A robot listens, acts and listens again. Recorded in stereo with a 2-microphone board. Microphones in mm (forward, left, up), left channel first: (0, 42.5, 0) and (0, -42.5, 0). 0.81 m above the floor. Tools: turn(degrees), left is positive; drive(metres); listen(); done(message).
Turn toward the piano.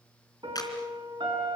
turn(degrees=-75)
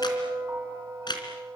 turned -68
turn(degrees=-35)
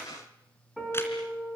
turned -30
done("Facing the piano.")